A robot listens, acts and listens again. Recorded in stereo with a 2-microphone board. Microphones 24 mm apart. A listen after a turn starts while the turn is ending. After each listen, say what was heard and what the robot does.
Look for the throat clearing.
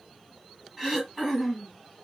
Turn 30° right.
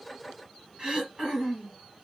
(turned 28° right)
So it is at 145° right. Turn 145° right.
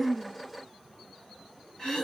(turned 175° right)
The throat clearing is now 30° left. Turn 30° left.
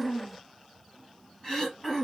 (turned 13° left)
The throat clearing is now 15° left. Turn 15° left.
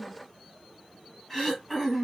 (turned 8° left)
The throat clearing is now 10° left. Turn 10° left.
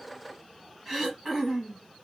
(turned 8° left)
Facing the throat clearing.